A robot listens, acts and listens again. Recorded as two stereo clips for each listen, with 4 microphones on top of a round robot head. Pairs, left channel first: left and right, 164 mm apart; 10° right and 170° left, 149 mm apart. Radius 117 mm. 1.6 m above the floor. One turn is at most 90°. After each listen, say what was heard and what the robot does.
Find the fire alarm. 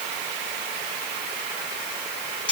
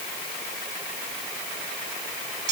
Keep listening.
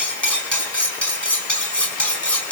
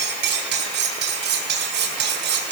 Keep listening.
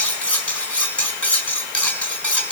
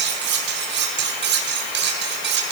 I can't make out a fire alarm, only cutlery clinking.